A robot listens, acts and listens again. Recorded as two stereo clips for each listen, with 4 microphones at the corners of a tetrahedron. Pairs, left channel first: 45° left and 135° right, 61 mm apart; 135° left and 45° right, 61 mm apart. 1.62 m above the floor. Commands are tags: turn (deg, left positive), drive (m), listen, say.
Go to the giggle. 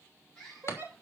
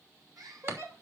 <turn deg="-85"/>
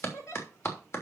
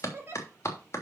<turn deg="10"/>
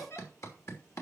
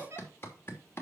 <drive m="1.0"/>
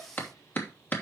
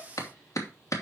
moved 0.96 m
<listen/>
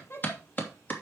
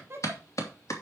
<drive m="1.0"/>
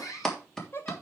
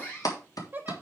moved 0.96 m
<drive m="1.0"/>
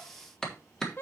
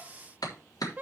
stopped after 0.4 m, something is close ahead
<say>I am next to the giggle.</say>